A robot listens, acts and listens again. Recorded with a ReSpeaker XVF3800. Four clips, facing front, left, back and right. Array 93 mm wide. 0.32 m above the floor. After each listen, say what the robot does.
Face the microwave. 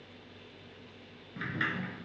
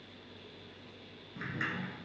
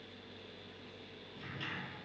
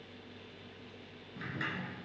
Keep listening.
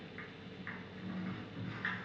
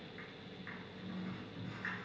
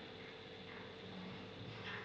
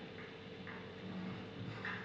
Keep listening.
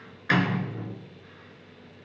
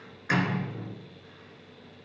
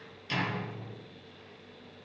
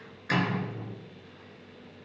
I can't make out a microwave to turn to.